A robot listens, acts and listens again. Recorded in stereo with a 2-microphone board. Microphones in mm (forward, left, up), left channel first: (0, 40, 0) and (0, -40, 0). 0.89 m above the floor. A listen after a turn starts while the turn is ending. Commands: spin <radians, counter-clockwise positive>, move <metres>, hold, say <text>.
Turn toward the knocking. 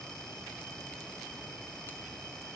hold
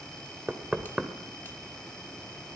spin -0.52
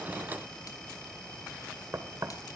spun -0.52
spin -2.36
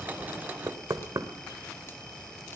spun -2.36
spin -0.87
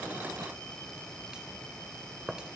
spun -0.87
say Facing the knocking.